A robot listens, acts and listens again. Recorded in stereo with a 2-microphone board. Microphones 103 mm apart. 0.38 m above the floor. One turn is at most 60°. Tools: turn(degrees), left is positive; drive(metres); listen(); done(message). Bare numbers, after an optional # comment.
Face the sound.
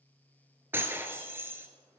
# The breaking glass: about 20° right or 160° right.
turn(-20)
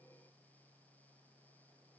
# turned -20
listen()
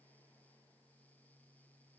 done("I heard breaking glass, but can't make it out now. It was about straight ahead or 140° right.")